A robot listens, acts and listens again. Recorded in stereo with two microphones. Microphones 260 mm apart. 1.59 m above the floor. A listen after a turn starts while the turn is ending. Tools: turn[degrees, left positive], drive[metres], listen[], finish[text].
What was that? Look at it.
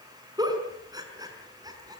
Action: turn[-30]
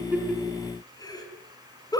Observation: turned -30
Thought: So it is at 15° left.
Action: turn[15]
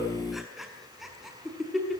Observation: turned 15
Action: finish[Facing the giggle.]